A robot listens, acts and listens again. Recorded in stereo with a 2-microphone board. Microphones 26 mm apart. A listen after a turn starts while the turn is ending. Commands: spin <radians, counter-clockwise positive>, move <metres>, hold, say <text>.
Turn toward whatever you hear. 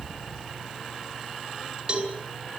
spin -0.52
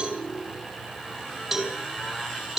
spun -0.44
spin -0.17
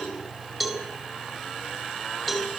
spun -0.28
say Facing the cowbell, 2 to 4 m away.